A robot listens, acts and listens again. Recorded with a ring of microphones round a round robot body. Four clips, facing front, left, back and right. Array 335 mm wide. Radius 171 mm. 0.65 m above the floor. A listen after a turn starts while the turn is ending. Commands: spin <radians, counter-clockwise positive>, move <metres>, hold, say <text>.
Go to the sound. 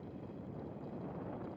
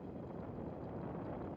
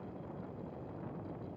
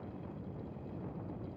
hold
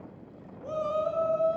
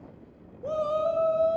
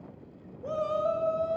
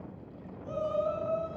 spin 2.01
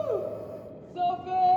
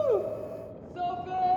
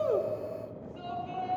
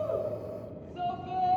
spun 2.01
spin 0.44
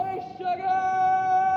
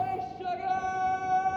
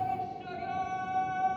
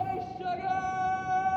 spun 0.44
move 1.0
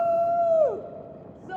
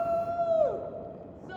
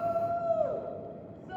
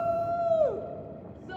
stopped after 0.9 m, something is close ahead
spin -0.26
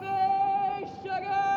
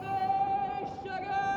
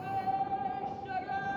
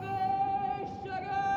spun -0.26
say Arrived at the shout, straight ahead.